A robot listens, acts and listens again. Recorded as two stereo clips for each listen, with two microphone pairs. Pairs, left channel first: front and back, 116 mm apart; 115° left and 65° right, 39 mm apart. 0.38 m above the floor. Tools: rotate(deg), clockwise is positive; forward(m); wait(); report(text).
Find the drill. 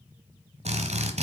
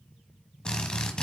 rotate(175)
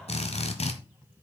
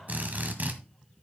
rotate(20)
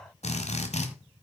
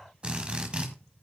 report("Facing the drill, 1 to 2 m away.")